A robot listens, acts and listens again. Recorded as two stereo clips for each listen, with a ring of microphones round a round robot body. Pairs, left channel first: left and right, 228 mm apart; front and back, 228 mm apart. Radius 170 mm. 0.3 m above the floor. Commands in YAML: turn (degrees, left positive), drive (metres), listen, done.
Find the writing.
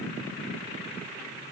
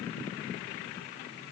listen: true
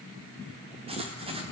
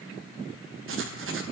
turn: -155
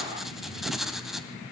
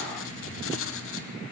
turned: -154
done: "Found it: writing, straight ahead, 2 to 4 m away."